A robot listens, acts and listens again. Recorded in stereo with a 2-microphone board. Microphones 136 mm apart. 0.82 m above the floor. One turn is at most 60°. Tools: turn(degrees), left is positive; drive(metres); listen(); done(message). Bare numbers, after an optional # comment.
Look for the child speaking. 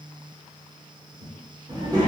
# The child speaking: about 30° right or 150° right.
turn(-30)
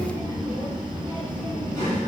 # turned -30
# So it is at 95° right.
turn(-60)
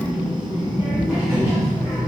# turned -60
# The child speaking is now 20° right.
turn(-20)
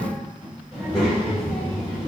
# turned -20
done("Facing the child speaking, 1 to 2 m away.")